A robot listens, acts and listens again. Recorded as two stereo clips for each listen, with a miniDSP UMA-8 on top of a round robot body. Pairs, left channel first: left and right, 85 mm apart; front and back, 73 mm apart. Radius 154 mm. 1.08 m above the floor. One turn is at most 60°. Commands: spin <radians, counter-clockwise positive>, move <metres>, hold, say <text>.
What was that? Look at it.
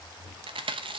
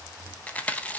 spin -1.05
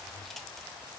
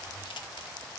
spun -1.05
spin -0.17
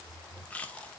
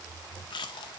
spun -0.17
spin 0.26
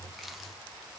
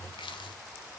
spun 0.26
hold
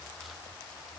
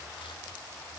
hold
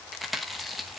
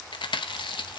say Found it: chewing, straight ahead.